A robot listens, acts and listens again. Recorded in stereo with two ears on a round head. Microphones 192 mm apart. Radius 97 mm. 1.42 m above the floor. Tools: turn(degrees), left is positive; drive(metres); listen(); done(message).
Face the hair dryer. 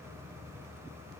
listen()
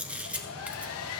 turn(degrees=90)
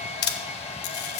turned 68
turn(degrees=30)
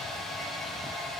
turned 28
done("Found it: a hair dryer, straight ahead, 1 to 2 m away.")